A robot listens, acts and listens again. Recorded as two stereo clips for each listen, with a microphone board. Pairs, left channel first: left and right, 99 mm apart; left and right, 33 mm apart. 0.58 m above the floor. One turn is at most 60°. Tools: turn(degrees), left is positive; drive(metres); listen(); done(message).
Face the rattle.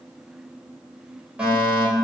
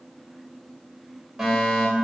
listen()
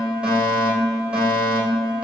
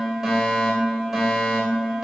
listen()
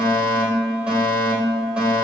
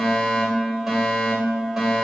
done("I can't make out a rattle to turn to.")